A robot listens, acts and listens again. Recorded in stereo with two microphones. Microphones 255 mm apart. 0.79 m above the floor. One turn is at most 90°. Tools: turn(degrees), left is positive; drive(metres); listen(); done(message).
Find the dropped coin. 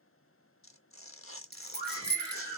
turn(degrees=-40)
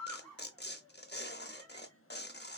listen()
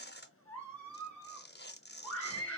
done("I heard a dropped coin, but can't make it out now. It was about straight ahead or 100° right.")